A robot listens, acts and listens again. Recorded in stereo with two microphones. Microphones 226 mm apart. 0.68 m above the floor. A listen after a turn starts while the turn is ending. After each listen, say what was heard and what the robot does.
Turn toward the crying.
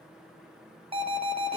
Keep listening.
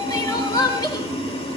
The crying: about 15° left or 165° left. Turn 15° left.
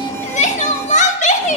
So it is at 150° left. Turn 150° left.
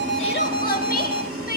Keep listening.
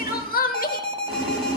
The crying is now 40° left. Turn 40° left.
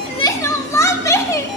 The crying is now 15° left. Turn 15° left.
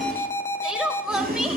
Facing the crying.